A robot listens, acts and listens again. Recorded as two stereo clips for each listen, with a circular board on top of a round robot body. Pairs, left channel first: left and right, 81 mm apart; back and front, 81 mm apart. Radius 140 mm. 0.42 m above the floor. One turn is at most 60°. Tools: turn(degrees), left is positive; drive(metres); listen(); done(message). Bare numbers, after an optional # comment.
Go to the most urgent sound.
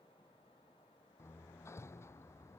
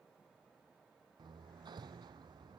listen()
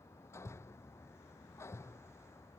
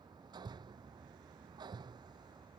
listen()
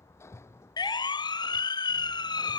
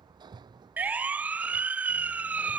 # The siren: 70° left.
turn(60)
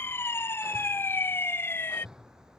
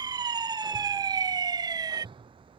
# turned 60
# The siren is now 30° left.
turn(30)
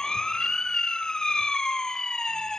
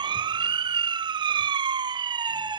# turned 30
# The siren is now 10° left.
turn(10)
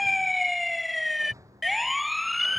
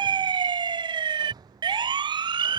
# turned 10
drive(1.0)
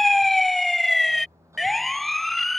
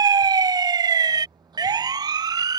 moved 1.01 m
drive(1.0)
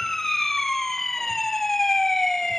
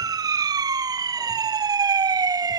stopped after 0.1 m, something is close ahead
done("I am next to the siren.")